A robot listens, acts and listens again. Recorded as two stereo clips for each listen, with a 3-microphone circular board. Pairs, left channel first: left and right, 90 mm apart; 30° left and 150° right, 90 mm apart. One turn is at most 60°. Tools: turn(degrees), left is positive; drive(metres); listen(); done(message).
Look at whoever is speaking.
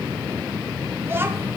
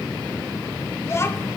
turn(degrees=-30)
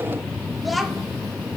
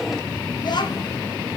done("Facing the child speaking, under 1 m away.")